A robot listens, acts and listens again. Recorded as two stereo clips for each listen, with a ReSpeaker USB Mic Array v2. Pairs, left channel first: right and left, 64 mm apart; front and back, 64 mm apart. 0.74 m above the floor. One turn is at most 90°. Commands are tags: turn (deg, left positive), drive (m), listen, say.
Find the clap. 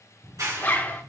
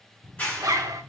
<turn deg="70"/>
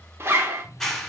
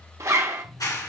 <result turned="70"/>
<say>Found it: a clap, straight ahead.</say>